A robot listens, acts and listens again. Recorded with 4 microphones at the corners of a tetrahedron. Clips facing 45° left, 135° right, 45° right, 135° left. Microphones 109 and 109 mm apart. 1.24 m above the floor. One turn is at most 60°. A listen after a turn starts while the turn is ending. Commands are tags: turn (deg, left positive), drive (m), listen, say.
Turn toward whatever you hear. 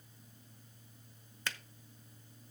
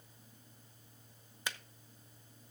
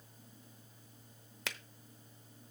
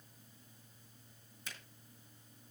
<turn deg="-60"/>
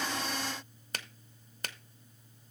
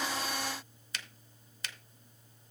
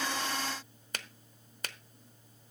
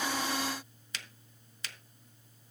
<say>Found it: a finger snap, straight ahead, under 1 m away.</say>